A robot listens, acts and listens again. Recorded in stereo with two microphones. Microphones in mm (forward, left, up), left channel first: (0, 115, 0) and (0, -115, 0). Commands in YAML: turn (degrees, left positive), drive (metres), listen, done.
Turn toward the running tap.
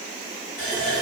turn: 35
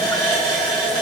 done: "Facing the running tap."